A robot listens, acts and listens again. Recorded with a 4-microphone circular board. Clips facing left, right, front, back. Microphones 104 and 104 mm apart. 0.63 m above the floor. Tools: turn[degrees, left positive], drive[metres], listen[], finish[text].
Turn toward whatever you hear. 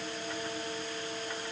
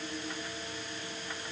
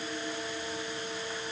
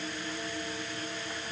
Action: listen[]
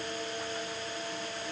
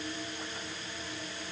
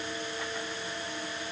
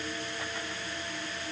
Action: listen[]
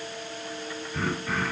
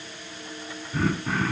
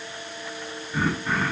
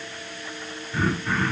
Thought: The throat clearing: 80° right.
Action: turn[-80]
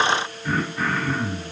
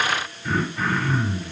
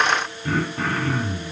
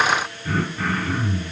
Action: finish[Facing the throat clearing, 1 to 2 m away.]